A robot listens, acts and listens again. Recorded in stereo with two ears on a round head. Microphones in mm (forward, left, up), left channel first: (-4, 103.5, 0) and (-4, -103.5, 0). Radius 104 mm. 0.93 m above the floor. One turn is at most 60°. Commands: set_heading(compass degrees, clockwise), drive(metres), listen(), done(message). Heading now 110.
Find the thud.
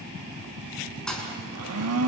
set_heading(80)
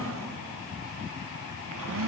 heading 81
listen()
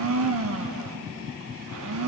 done("I heard a thud, but can't make it out now. It was about 25° right or 150° left.")